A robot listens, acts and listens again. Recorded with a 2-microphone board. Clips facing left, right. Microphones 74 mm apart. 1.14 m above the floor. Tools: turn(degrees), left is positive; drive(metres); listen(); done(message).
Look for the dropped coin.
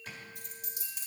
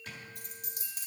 turn(degrees=-55)
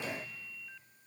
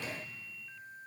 listen()
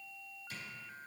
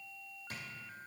done("I heard a dropped coin, but can't make it out now. It was about straight ahead or 70° right.")